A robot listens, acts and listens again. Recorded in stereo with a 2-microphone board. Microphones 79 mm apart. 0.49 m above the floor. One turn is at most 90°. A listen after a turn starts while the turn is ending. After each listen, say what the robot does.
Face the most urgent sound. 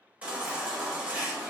Turn 20° right.
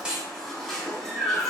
Facing the baby crying, under 1 m away.